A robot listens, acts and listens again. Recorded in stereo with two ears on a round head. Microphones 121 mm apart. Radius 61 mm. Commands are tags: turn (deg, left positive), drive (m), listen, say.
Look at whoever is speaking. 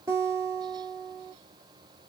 <listen/>
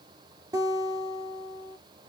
<listen/>
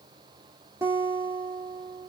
<say>I can't make out anyone speaking to turn to.</say>